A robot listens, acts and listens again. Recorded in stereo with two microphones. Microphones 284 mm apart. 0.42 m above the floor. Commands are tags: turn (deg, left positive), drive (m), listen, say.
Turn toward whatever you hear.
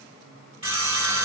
<turn deg="-90"/>
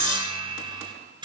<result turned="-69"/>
<turn deg="-20"/>
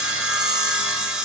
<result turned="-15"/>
<say>Found it: sawing, straight ahead, under 1 m away.</say>